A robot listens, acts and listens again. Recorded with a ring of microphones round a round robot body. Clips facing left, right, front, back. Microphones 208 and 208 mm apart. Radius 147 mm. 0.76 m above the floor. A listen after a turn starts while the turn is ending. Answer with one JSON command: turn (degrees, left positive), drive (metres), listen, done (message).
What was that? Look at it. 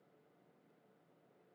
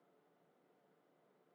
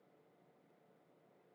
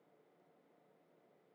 {"listen": true}
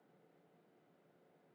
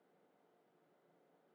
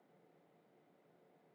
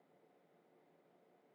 {"listen": true}
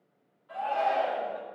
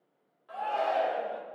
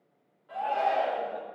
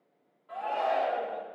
{"turn": -80}
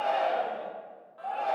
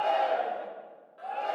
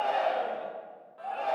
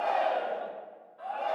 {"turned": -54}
{"turn": -25}
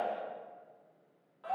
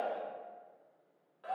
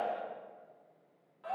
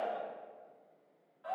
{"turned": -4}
{"turn": -25}
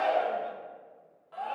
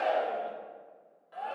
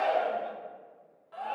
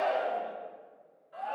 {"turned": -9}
{"turn": -15}
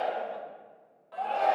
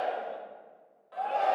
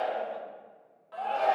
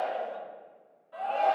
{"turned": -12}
{"done": "Facing the shout, 2 to 4 m away."}